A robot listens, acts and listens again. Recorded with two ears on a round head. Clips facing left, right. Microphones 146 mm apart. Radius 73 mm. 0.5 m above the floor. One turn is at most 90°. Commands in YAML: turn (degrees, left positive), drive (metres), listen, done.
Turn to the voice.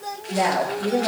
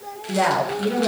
turn: -90
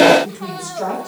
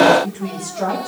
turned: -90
done: "Found it: a woman speaking, straight ahead."